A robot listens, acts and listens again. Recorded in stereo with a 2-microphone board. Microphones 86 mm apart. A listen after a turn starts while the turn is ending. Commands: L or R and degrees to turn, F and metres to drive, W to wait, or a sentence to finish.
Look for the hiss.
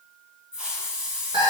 R30
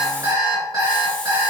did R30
W
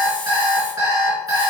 W
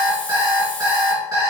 I heard a hiss, but can't make it out now. It was about 20° left or 140° right.